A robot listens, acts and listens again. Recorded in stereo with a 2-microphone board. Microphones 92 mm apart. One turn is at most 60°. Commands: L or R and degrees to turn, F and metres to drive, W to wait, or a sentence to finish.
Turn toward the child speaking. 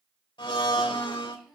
L30
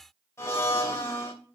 W
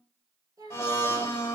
R45
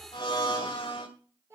R30
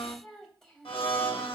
Facing the child speaking, 2 to 4 m away.